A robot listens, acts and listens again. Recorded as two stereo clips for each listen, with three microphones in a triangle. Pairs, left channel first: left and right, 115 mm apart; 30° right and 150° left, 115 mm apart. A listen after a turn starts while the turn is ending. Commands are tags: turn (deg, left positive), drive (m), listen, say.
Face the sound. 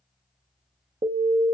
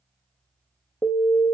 <turn deg="-105"/>
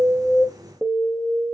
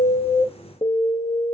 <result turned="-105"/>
<turn deg="-10"/>
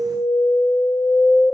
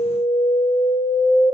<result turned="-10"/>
<say>Facing the alarm, 1 to 2 m away.</say>